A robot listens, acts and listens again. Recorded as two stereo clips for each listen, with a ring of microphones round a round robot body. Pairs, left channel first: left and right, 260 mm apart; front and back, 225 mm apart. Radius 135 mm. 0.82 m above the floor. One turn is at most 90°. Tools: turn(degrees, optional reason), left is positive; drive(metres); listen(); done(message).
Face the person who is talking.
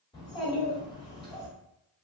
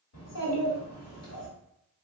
turn(degrees=15, reason="The child speaking: 15° left.")
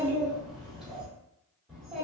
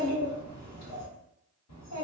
done("Found it: a child speaking, straight ahead, 1 to 2 m away.")